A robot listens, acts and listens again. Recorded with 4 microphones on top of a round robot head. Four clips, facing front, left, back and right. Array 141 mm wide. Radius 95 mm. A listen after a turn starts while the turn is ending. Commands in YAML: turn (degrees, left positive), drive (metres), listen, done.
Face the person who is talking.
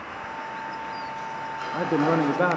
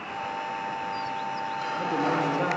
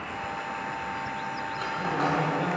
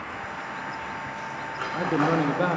turn: -15
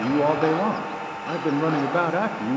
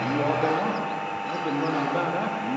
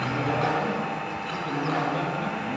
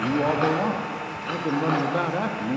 done: "Facing the man speaking, 1 to 2 m away."